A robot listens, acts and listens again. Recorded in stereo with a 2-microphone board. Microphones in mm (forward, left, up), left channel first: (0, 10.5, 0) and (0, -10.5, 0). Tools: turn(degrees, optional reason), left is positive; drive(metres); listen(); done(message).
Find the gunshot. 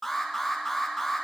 listen()
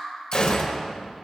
turn(degrees=35, reason="The gunshot: about 35° left or 145° left.")
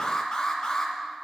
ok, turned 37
listen()
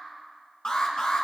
done("I heard a gunshot, but can't make it out now. It was about straight ahead or 105° left.")